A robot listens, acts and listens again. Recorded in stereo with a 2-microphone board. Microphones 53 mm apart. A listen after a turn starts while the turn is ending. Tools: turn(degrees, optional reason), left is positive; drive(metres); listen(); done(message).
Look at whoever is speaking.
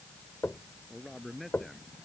turn(degrees=30)
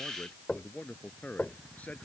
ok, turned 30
turn(degrees=150, reason="So it is at 150° left.")
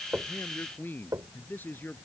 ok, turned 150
turn(degrees=35, reason="The man speaking is now 35° left.")
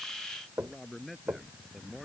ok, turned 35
done("Found it: a man speaking, straight ahead.")